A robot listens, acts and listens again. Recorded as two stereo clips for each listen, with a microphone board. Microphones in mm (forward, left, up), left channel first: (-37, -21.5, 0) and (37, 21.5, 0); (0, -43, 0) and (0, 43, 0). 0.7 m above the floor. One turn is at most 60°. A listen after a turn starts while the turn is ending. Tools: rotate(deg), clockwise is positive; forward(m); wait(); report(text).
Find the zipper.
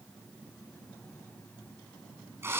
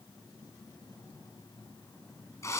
wait()
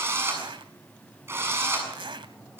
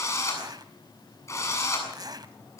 rotate(-50)
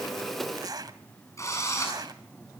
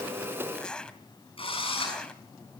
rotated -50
rotate(10)
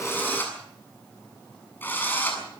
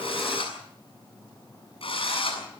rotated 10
wait()
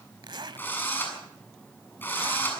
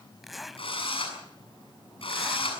report("Found it: a zipper, straight ahead.")